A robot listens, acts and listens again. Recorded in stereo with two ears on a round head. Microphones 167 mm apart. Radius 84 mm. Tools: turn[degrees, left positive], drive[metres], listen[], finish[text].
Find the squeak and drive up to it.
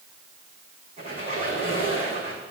Thought: The squeak: about 35° right or 145° right.
Action: turn[-35]
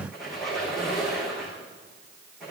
Action: drive[1.0]
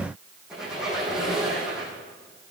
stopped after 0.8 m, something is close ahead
Action: finish[Something is in my way. I am facing the squeak but have not reached it.]